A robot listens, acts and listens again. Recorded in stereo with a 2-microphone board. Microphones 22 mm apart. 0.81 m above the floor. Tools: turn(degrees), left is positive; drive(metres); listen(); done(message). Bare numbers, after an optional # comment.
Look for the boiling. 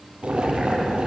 # The boiling: about 55° right or 125° right.
turn(-55)
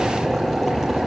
done("Found it: boiling, straight ahead.")